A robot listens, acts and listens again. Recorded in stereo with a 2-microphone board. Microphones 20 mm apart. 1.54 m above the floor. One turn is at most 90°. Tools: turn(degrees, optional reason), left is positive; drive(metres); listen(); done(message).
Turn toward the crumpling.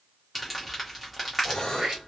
turn(degrees=-30)
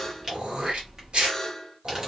turn(degrees=-90, reason="So it is at 145° right.")
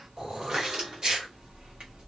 turn(degrees=-75, reason="The crumpling is now 75° right.")
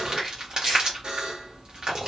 turn(degrees=-45, reason="The crumpling is now 45° right.")
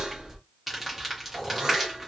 done("Found it: crumpling, straight ahead, 1 to 2 m away.")